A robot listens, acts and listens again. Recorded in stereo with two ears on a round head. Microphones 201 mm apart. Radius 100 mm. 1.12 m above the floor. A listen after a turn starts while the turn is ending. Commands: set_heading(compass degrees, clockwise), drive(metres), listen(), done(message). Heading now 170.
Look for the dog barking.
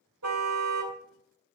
listen()
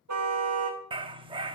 set_heading(195)
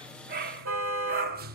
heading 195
set_heading(320)
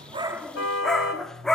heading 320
done("Found it: a dog barking, straight ahead, under 1 m away.")